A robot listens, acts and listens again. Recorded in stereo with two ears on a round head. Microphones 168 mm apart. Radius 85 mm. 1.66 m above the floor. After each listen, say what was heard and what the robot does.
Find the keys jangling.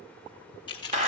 The keys jangling: about 25° left or 155° left. Turn 25° left.
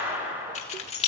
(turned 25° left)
The keys jangling: about 35° left or 145° left. Turn 35° left.
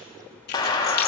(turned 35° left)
Keep listening.
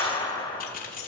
So it is at 130° left. Turn 130° left.
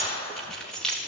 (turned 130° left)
Facing the keys jangling.